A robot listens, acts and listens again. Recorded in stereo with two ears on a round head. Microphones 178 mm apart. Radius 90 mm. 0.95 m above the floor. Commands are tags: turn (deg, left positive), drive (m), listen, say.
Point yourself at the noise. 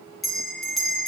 <turn deg="30"/>
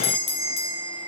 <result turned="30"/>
<turn deg="150"/>
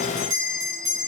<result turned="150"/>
<turn deg="-20"/>
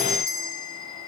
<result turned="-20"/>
<say>Facing the bell.</say>